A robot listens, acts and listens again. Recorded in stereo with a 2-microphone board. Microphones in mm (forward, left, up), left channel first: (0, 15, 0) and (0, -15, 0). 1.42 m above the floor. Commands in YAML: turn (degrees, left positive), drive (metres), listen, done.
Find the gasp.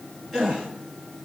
turn: -30
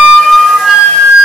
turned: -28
listen: true
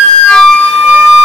done: "I heard a gasp, but can't make it out now. It was about 25° left or 145° right."